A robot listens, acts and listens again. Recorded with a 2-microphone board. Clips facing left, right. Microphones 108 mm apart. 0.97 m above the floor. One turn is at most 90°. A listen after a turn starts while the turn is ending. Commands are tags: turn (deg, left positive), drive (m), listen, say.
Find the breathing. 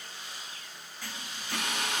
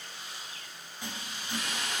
<listen/>
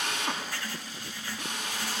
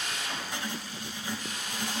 <listen/>
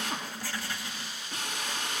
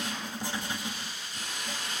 <say>I can't make out breathing, only a drill and writing.</say>